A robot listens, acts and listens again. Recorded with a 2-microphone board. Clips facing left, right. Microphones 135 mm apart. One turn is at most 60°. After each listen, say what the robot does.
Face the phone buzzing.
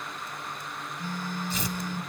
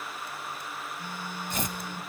Turn 30° right.
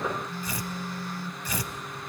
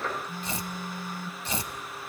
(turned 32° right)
Turn 60° right.
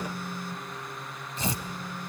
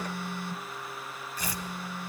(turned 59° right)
Turn 60° right.
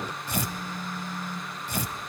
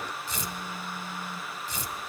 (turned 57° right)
Turn 15° right.
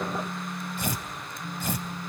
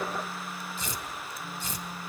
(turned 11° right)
Facing the phone buzzing, under 1 m away.